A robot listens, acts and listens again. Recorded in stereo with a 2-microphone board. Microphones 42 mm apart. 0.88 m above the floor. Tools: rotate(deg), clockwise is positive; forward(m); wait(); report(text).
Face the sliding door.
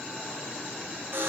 wait()
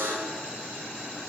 wait()
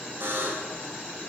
report("I can't make out a sliding door, only a buzzer.")